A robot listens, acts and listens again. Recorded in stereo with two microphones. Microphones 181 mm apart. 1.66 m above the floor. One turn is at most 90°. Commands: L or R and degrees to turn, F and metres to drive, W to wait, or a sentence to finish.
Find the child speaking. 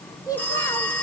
L20
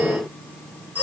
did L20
W
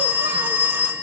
W
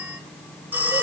I heard a child speaking, but can't make it out now. It was about straight ahead or 140° left.